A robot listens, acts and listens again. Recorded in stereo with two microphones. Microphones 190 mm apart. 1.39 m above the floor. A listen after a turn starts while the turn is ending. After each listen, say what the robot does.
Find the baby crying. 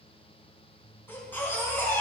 Turn 30° left.
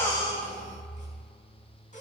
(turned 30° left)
Turn 140° left.
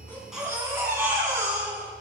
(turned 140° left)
Turn 15° right.
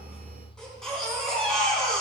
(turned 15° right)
Found it: a baby crying, straight ahead, over 4 m away.